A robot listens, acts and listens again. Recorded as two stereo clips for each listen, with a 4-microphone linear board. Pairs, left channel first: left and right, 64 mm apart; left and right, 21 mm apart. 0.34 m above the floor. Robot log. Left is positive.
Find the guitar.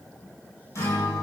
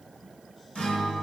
note: The guitar: about 50° left or 130° left.
cmd yaw +50
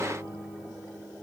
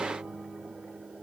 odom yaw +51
end: Found it: a guitar, straight ahead.